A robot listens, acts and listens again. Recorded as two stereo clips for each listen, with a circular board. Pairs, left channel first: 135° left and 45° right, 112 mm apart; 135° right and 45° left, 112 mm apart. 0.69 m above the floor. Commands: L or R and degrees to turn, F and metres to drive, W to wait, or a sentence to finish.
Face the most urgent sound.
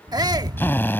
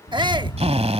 Facing the shout.